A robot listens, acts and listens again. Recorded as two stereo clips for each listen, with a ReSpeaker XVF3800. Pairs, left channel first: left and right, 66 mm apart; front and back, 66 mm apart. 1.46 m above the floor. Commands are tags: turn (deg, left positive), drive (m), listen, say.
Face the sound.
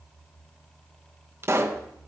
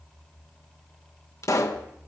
<turn deg="-40"/>
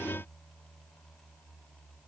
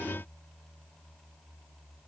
<say>Facing where the pop came from. I can't hear it now.</say>